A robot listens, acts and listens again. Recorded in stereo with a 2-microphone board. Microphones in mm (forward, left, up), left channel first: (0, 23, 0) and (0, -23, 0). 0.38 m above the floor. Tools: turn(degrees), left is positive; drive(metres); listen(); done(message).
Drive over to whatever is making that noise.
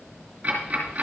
turn(degrees=-30)
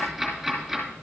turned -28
drive(metres=1.0)
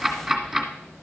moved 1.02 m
drive(metres=1.0)
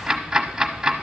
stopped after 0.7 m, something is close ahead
turn(degrees=-10)
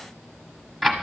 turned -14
done("I am next to the ticking.")